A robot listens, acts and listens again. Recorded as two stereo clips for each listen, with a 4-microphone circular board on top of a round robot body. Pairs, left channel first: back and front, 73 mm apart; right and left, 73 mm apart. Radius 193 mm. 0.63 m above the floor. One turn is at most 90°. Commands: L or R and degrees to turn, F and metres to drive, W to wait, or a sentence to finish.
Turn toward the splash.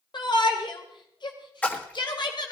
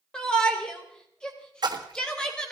L90
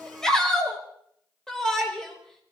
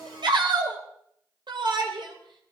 L20
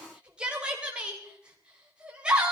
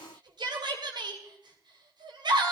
Facing where the splash came from. I can't hear it now.